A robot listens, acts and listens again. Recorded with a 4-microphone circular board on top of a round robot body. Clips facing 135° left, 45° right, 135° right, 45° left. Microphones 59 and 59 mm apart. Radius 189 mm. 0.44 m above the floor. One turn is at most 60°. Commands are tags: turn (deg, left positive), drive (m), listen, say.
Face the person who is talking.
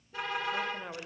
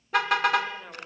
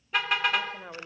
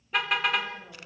<turn deg="-60"/>
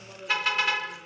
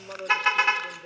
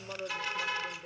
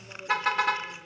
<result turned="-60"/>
<turn deg="-60"/>
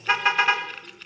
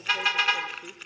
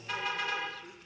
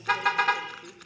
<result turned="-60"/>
<turn deg="-30"/>
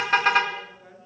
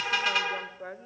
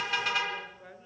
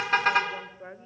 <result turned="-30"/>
<turn deg="-15"/>
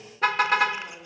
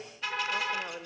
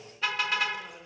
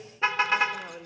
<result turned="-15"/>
<say>Found it: a woman speaking, straight ahead.</say>